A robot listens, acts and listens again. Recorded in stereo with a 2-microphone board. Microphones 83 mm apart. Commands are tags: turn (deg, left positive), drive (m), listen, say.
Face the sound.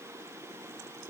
<listen/>
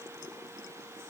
<listen/>
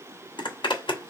<turn deg="70"/>
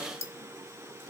<turn deg="35"/>
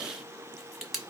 <say>Found it: a zipper, straight ahead, 1 to 2 m away.</say>